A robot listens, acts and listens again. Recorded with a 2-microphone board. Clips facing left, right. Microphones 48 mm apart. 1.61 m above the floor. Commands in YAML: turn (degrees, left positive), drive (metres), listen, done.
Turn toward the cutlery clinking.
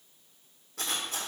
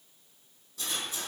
turn: 65
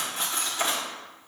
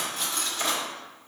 turn: 25
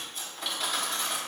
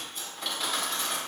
done: "Facing the cutlery clinking."